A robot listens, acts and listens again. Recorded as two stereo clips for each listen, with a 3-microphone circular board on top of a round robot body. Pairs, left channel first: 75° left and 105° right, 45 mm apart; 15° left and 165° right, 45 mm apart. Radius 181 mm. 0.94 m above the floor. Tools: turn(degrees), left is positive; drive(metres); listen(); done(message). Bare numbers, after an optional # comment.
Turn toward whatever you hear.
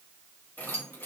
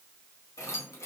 # The keys jangling: 30° left.
turn(30)
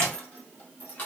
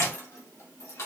# The keys jangling is now 20° left.
turn(20)
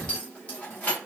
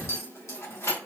# The keys jangling is now 15° left.
turn(15)
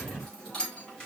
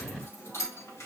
done("Facing the keys jangling, 2 to 4 m away.")